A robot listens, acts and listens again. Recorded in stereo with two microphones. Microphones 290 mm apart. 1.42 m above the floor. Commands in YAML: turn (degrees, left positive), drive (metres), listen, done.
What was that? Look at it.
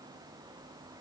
listen: true
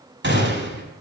turn: -40
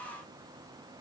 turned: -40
listen: true
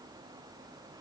done: "I heard a gunshot, but can't make it out now. It was about straight ahead or 100° right."